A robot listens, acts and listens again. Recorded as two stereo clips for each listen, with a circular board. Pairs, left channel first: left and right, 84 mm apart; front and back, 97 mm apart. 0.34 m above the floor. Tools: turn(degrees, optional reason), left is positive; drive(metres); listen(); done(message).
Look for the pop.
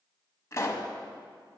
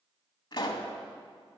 turn(degrees=35, reason="The pop: 35° left.")
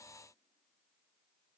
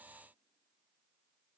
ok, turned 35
done("I heard a pop from this way, but can't make it out now.")